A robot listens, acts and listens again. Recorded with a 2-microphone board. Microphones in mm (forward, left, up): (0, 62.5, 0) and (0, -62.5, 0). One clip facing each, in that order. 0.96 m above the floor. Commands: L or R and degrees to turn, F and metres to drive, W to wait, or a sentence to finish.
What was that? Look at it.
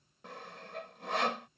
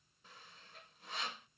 L90
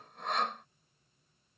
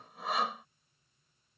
Facing the sawing.